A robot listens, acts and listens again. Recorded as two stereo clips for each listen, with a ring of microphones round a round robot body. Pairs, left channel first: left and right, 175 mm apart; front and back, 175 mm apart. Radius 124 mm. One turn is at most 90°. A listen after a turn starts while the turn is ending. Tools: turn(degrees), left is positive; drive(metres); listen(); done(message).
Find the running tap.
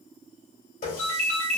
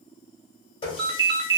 turn(degrees=55)
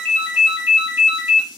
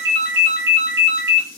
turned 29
turn(degrees=25)
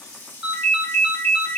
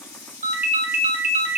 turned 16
turn(degrees=10)
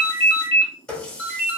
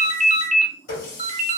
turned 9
done("Facing the running tap.")